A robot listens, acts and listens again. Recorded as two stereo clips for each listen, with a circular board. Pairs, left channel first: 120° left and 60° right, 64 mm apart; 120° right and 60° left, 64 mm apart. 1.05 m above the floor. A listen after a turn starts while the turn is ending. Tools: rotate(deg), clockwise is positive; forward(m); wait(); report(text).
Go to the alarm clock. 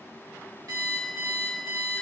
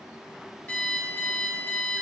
rotate(55)
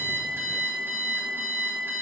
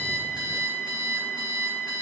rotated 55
forward(1.0)
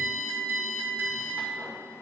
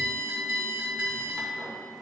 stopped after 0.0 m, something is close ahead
report("Blocked. The alarm clock is further on, straight ahead.")